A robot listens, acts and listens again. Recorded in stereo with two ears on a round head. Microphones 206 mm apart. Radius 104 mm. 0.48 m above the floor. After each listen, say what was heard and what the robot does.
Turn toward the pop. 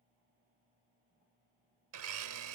Keep listening.
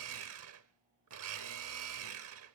Keep listening.
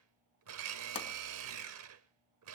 The pop: about 30° left or 150° left. Turn 30° left.
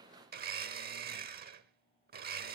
Keep listening.
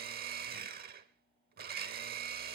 I heard a pop, but can't make it out now. It was about straight ahead or 120° left.